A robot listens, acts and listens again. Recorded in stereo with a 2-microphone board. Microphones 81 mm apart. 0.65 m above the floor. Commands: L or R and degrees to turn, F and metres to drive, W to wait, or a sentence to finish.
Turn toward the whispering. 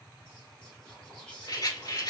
L30
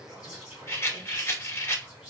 R15
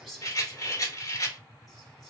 Found it: whispering, straight ahead.